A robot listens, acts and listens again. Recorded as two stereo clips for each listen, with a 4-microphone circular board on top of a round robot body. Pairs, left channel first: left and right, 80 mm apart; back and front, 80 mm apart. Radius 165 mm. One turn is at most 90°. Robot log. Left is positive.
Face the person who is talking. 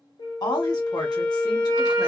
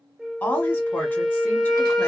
note: The woman speaking: 115° left.
cmd yaw +90
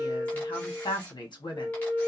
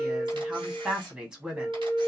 note: The woman speaking is now 80° left.
cmd yaw +80
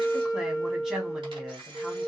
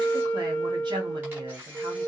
end: Facing the woman speaking.